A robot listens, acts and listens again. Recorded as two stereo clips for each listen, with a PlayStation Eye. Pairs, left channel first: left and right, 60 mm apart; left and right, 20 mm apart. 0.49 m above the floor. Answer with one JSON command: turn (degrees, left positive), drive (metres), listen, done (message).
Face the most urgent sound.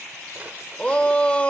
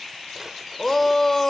{"turn": 20}
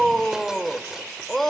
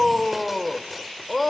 {"done": "Facing the shout."}